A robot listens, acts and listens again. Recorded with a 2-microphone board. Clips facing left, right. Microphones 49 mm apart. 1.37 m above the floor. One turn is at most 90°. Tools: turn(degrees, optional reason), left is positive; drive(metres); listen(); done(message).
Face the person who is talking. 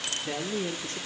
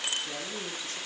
turn(degrees=45, reason="The man speaking: about 45° left or 135° left.")
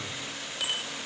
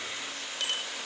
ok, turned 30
listen()
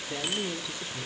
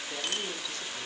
turn(degrees=15, reason="So it is at 15° left.")
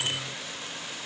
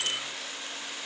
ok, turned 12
listen()
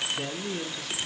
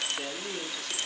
done("Found it: a man speaking, straight ahead, 2 to 4 m away.")